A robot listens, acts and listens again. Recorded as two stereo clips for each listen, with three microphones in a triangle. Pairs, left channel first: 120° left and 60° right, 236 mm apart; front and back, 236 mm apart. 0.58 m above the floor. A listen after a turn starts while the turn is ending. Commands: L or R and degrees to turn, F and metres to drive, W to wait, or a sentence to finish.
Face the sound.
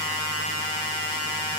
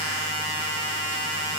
W
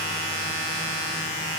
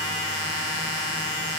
W
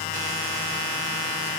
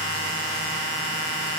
I can't make out anything to turn to.